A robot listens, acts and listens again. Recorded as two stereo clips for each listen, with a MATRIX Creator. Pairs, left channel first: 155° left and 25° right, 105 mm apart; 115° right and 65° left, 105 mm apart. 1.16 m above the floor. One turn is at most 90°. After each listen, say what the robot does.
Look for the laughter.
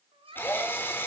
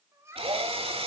Facing the laughter, 2 to 4 m away.